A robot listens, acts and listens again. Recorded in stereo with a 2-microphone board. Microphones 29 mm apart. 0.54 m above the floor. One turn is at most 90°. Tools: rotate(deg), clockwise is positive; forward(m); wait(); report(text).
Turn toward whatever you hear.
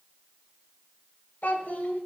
rotate(-60)
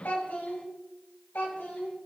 rotate(-80)
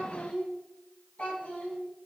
rotate(-55)
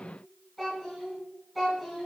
report("Found it: a child speaking, straight ahead, 2 to 4 m away.")